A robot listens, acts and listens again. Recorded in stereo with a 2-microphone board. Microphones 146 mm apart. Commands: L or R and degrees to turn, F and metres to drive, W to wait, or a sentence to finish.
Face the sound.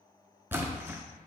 R30
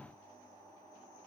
W
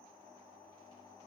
I heard a splash, but can't make it out now. It was about 15° left or 135° right.